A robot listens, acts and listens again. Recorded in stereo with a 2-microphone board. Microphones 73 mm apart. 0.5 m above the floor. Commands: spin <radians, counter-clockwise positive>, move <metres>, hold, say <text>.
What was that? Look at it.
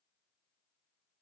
hold
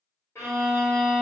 spin 0.61
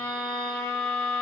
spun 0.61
say Found it: a violin, straight ahead, under 1 m away.